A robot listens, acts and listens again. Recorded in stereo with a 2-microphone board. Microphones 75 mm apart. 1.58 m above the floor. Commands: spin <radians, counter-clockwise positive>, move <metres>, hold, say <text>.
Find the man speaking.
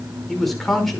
spin 0.52
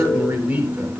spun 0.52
spin -0.35
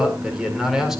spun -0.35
say Facing the man speaking, over 4 m away.